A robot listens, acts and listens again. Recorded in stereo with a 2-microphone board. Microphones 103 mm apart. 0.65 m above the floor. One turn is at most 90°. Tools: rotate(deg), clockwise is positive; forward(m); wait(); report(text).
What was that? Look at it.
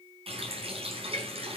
rotate(70)
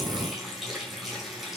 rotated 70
report("Facing the running tap.")